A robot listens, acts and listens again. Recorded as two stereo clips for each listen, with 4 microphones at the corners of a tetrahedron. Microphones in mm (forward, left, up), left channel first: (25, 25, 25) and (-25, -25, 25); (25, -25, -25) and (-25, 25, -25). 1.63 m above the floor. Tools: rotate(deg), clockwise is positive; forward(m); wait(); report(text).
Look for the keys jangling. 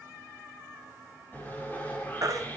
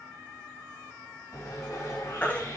wait()
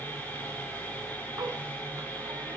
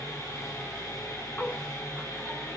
wait()
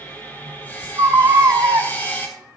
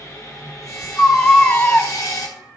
report("I can't make out keys jangling, only sawing and a baby crying.")